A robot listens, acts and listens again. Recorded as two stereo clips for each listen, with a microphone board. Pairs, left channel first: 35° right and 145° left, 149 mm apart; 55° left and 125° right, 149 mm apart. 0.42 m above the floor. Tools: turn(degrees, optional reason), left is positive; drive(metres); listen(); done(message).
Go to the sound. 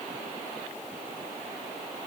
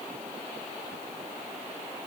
listen()
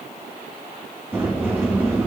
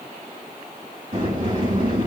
turn(degrees=-140, reason="The sliding door: 140° right.")
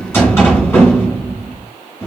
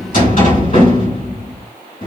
turn(degrees=40, reason="The sliding door is now 40° left.")
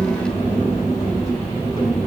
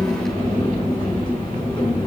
drive(metres=1.0)
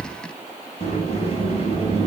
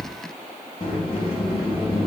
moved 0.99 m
turn(degrees=10, reason="The sliding door is now 10° left.")
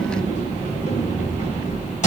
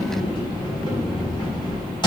drive(metres=1.0)
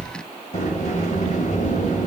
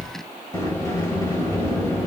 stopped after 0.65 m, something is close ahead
turn(degrees=-10, reason="The sliding door is now 10° right.")
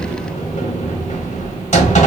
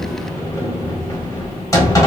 turn(degrees=-10, reason="The sliding door is now 10° right.")
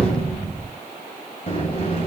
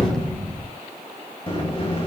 done("Arrived at the sliding door, straight ahead.")